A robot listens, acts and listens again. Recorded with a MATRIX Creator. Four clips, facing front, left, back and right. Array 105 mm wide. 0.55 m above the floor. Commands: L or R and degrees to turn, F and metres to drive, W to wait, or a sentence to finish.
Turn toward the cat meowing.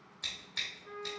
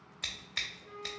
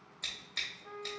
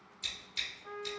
W
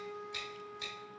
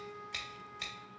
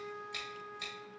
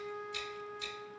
W
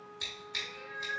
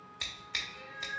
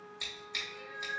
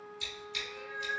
R65
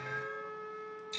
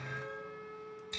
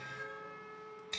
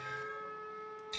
W
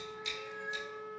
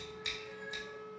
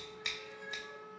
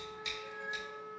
W
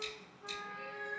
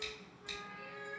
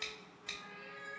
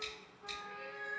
R45
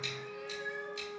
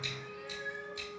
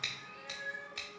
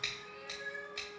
Facing the cat meowing.